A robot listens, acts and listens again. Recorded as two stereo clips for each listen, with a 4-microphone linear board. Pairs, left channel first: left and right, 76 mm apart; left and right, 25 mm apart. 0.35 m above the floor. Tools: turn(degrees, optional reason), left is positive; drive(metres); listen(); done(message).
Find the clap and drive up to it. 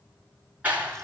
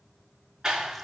turn(degrees=-20, reason="The clap: about 20° right or 160° right.")
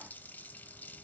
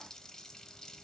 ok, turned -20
listen()
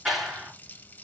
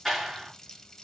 drive(metres=1.0)
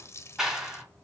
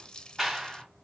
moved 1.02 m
drive(metres=1.0)
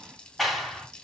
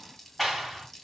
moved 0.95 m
drive(metres=1.0)
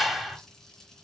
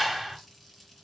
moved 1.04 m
drive(metres=1.0)
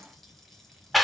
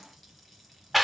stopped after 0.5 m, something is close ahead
done("Arrived at the clap, straight ahead.")